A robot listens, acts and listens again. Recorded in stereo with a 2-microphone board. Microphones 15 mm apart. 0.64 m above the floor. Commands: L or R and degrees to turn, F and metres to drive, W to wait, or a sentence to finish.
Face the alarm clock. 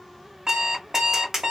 R60
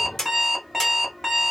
Facing the alarm clock, 1 to 2 m away.